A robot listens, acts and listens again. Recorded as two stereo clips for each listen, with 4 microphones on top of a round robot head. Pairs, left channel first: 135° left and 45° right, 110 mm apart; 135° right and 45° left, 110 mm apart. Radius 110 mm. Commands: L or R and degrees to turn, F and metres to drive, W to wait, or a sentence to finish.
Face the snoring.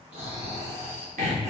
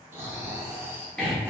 R25
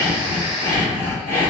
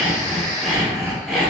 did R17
R10
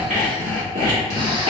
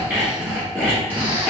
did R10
W
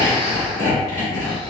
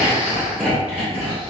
W
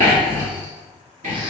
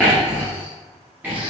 I heard snoring from this way, but can't make it out now.